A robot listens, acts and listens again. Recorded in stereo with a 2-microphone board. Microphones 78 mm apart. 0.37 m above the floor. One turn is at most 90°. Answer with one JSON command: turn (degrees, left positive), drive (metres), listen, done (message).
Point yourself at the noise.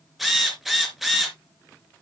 {"turn": -30}
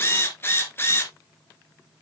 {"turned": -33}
{"turn": 30}
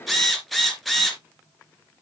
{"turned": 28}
{"done": "Facing the drill."}